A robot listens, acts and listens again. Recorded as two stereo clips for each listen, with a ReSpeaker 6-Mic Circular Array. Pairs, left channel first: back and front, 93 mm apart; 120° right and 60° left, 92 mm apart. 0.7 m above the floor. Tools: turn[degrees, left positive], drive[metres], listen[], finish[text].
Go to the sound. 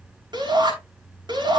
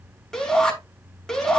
Thought: The shout: 35° right.
Action: turn[-35]
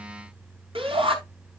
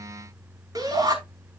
Thought: The shout is now 15° left.
Action: turn[15]
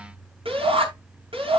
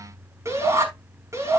Action: drive[1.0]
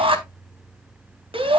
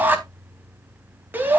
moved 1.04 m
Thought: The shout is now 10° right.
Action: turn[-10]
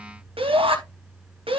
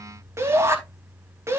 Action: drive[1.0]
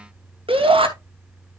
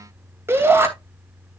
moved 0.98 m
Action: drive[1.0]
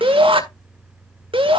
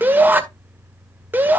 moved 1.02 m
Thought: The shout is now 10° right.
Action: turn[-10]
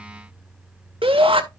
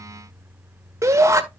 Action: drive[1.0]
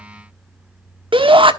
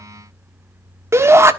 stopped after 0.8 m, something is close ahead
Action: finish[Arrived at the shout, straight ahead.]